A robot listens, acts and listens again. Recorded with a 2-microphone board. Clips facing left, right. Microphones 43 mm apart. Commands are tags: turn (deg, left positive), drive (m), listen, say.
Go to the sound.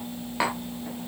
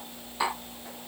<turn deg="65"/>
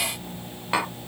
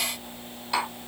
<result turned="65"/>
<turn deg="50"/>
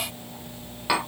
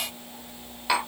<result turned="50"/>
<turn deg="10"/>
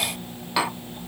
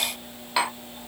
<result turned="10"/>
<drive m="1.0"/>
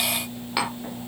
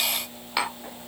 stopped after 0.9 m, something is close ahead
<say>Arrived at the tapping, straight ahead.</say>